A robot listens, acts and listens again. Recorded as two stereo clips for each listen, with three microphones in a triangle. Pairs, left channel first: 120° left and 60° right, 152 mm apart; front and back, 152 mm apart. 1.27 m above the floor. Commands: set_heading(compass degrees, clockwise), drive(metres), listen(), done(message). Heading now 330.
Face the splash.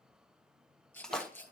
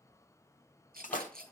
set_heading(295)
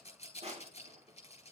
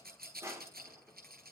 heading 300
done("I heard a splash from this way, but can't make it out now.")